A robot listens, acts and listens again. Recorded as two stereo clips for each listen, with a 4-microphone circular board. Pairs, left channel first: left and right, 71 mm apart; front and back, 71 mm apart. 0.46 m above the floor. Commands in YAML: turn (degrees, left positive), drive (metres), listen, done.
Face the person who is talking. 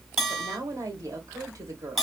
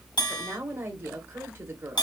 turn: -125
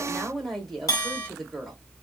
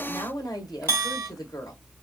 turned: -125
done: "Found it: a woman speaking, straight ahead, 1 to 2 m away."